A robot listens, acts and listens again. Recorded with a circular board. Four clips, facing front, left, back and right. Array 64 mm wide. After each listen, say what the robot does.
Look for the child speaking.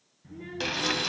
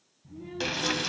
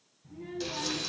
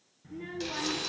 Turn 55° right.
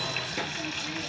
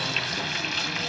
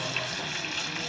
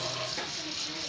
Keep listening.
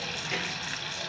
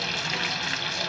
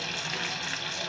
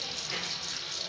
Keep listening.
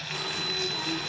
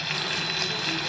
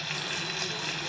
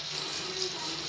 Facing where the child speaking came from. I can't hear it now.